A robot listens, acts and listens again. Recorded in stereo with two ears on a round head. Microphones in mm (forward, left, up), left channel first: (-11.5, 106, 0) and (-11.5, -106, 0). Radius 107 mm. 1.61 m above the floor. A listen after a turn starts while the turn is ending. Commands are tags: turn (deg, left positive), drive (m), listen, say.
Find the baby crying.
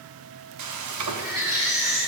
<turn deg="-30"/>
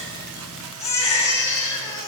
<turn deg="15"/>
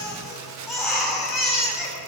<say>Facing the baby crying.</say>